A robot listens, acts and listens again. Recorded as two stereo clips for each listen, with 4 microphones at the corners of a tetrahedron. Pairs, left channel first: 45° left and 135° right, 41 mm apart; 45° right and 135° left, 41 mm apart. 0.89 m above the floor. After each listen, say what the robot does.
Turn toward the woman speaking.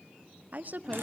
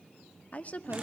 Turn 95° right.
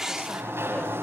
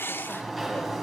Keep listening.
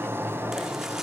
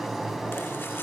Keep listening.
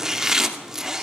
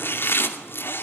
Facing where the woman speaking came from. I can't hear it now.